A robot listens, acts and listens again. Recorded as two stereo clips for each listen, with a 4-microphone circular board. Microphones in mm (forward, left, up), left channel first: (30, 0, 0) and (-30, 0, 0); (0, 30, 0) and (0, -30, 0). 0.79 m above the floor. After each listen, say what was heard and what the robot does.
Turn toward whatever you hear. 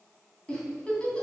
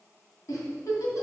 The giggle: 75° left. Turn 75° left.
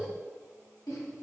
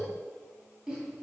The giggle is now 15° right. Turn 15° right.
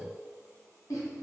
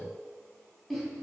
Facing the giggle.